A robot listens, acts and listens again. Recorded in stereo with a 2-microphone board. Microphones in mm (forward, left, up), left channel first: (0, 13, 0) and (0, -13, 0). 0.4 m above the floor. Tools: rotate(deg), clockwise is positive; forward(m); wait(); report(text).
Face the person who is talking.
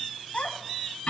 rotate(-50)
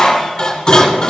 wait()
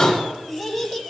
report("Facing the child speaking, 1 to 2 m away.")